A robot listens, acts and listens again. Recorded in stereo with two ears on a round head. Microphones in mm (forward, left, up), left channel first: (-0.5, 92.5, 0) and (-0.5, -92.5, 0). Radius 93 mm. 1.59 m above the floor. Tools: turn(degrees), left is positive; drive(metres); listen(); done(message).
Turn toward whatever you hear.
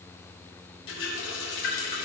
turn(degrees=65)
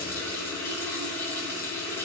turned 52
turn(degrees=15)
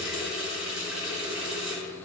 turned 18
done("Facing the running tap, 2 to 4 m away.")